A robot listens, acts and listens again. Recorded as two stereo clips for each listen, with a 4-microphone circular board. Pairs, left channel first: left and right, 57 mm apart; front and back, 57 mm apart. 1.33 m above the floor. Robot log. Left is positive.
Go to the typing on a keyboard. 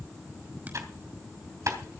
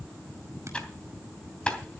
note: The typing on a keyboard: 70° right.
cmd yaw -70
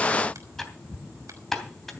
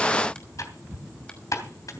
cmd fwd 1.0
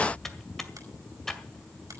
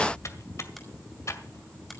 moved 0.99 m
cmd fwd 1.0
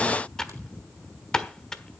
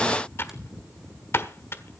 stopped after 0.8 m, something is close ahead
note: The typing on a keyboard is now 15° left.
cmd yaw +15
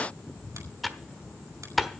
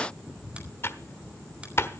end: I am next to the typing on a keyboard.